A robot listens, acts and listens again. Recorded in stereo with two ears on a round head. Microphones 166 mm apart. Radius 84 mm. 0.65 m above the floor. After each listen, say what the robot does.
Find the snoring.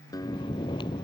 Turn 25° left.
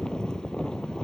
Found it: snoring, straight ahead.